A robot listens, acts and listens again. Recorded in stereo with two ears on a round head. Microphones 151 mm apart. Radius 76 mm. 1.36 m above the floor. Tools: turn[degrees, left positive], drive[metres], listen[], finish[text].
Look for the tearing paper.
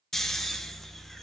Action: listen[]
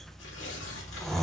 Action: turn[90]
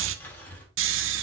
Thought: So it is at 10° left.
Action: turn[10]
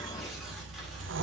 Action: listen[]
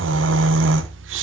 Action: listen[]
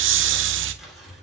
Action: finish[Found it: tearing paper, straight ahead.]